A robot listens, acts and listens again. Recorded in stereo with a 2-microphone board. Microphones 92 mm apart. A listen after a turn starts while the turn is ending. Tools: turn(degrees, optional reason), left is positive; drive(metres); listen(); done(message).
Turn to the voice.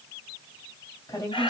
turn(degrees=40, reason="The woman speaking: about 40° left or 140° left.")
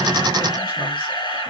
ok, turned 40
listen()
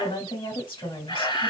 turn(degrees=100, reason="So it is at 100° left.")
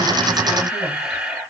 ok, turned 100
listen()
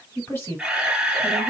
turn(degrees=30, reason="The woman speaking is now 30° left.")
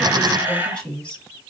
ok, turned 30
turn(degrees=15, reason="The woman speaking is now 15° left.")
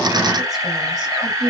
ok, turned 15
done("Found it: a woman speaking, straight ahead.")